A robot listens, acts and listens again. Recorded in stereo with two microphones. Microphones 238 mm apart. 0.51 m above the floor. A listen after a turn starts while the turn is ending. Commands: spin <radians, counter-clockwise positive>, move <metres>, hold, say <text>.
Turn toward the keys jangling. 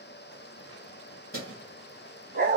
spin 1.05
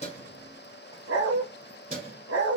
spin -0.70
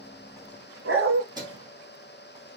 spin -0.35
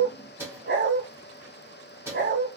spin -0.17
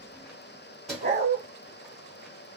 say Found it: keys jangling, straight ahead.